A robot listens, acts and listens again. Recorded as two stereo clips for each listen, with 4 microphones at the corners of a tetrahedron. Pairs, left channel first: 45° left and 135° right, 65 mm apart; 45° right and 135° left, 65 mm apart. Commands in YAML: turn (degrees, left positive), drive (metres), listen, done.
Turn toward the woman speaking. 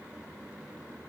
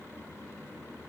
listen: true
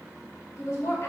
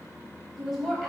turn: 40
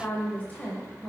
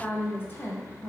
turn: -30
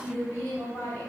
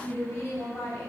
turn: -15
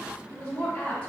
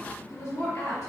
turn: -15
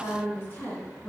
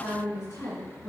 turn: -10
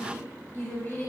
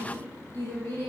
done: "Facing the woman speaking, 2 to 4 m away."